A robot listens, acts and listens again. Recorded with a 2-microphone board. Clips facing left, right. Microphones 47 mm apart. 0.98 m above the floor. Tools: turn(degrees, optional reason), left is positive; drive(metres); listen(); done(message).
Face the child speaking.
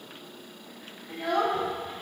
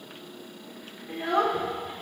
turn(degrees=-25, reason="The child speaking: about 25° right or 155° right.")
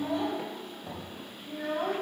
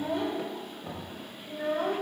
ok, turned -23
turn(degrees=-30, reason="The child speaking: about 30° right or 150° right.")
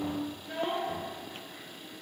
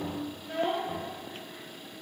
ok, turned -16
turn(degrees=-45, reason="The child speaking: about 45° right or 135° right.")
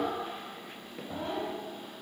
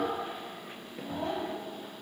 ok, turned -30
turn(degrees=-110, reason="So it is at 110° right.")
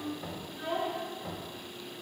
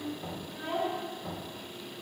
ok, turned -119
done("Facing the child speaking.")